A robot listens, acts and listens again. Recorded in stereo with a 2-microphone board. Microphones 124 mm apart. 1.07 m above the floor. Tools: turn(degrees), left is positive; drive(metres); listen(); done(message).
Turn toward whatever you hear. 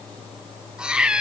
turn(degrees=-30)
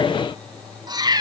turn(degrees=-145)
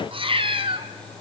turn(degrees=-45)
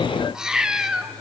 done("Found it: a cat meowing, straight ahead, 1 to 2 m away.")